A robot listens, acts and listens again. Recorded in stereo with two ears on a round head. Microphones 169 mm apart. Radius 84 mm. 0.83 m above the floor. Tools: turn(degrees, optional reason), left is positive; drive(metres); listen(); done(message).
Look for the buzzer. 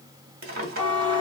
turn(degrees=-25, reason="The buzzer: about 25° right or 155° right.")
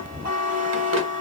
turn(degrees=-130, reason="So it is at 130° right.")
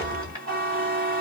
turn(degrees=-55, reason="The buzzer is now 55° right.")
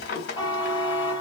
turn(degrees=25, reason="The buzzer is now 25° left.")
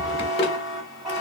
done("Facing the buzzer, 1 to 2 m away.")